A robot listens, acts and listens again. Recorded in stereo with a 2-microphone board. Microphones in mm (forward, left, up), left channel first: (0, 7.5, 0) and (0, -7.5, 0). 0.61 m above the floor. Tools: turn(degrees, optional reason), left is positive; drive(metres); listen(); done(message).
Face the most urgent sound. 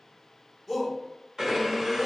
turn(degrees=-25, reason="The shout: about 25° right or 155° right.")
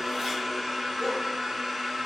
listen()
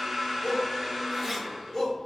done("Found it: a shout, straight ahead.")